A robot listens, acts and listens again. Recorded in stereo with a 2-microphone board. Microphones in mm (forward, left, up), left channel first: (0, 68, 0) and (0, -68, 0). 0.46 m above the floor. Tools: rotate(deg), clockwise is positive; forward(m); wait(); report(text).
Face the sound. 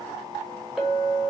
rotate(-30)
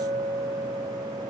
rotate(35)
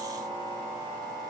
wait()
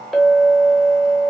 report("Found it: a clink, straight ahead, under 1 m away.")